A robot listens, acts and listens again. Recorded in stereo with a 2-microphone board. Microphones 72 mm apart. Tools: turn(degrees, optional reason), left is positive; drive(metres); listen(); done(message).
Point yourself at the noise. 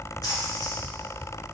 turn(degrees=65, reason="The splash: about 65° left or 115° left.")
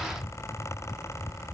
listen()
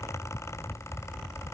done("I heard a splash, but can't make it out now. It was about straight ahead or 50° left.")